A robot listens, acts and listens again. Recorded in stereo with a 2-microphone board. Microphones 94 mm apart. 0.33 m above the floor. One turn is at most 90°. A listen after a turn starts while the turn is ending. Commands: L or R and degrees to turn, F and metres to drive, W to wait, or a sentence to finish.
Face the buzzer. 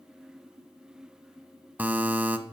R20
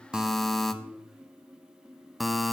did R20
Facing the buzzer.